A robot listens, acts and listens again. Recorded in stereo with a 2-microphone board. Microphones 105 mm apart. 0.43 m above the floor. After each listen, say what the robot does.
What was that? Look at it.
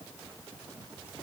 Keep listening.
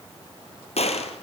Turn 75° left.
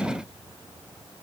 Keep listening.
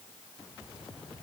I heard a gunshot, but can't make it out now. It was about straight ahead or 30° left.